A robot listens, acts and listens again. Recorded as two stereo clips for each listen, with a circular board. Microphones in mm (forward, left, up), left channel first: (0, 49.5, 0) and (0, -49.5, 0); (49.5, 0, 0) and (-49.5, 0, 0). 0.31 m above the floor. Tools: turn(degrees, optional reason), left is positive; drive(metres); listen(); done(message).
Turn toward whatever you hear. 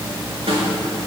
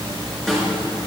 turn(degrees=-85, reason="The snare drum: 85° right.")
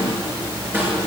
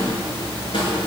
turn(degrees=-25, reason="The snare drum is now 25° right.")
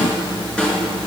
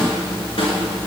turn(degrees=10, reason="The snare drum is now 10° left.")
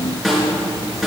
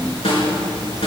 done("Found it: a snare drum, straight ahead, over 4 m away.")